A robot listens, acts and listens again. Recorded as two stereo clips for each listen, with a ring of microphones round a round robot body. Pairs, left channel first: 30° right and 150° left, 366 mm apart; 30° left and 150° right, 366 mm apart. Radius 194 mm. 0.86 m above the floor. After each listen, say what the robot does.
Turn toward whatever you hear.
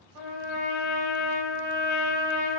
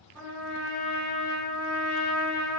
Turn 175° left.
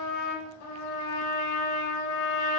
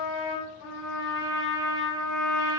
Found it: a trumpet, straight ahead.